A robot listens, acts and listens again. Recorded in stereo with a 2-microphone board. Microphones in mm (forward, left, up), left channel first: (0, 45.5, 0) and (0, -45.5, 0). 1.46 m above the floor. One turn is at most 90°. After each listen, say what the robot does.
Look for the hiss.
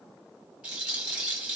Keep listening.
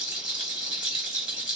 Keep listening.
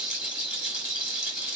I can't make out a hiss to turn to.